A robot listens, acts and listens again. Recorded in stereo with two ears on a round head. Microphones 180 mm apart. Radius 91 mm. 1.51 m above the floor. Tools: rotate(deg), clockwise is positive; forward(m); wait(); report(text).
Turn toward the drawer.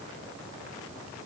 wait()
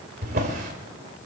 rotate(50)
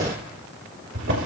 rotate(75)
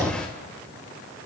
report("Facing the drawer.")